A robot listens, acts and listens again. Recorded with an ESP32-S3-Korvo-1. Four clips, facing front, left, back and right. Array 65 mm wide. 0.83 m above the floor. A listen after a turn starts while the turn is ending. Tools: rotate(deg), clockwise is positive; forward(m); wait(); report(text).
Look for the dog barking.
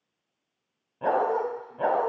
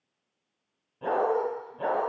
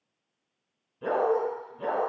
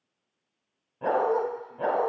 report("Facing the dog barking, 2 to 4 m away.")